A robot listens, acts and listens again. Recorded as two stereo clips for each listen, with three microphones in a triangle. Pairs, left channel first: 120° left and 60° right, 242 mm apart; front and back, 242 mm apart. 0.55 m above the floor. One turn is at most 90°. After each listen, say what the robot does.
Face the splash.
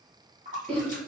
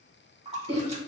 Turn 90° right.
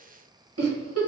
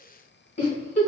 Turn 25° right.
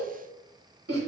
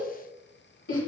I heard a splash from this way, but can't make it out now.